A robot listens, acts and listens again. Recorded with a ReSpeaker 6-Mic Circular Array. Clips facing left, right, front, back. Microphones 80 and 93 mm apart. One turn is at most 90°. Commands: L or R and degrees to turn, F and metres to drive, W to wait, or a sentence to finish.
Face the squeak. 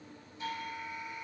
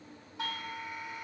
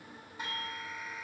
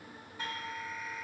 W
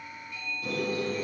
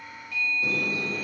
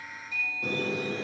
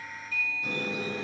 R30
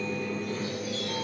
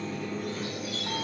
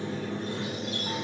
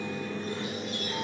Facing the squeak, over 4 m away.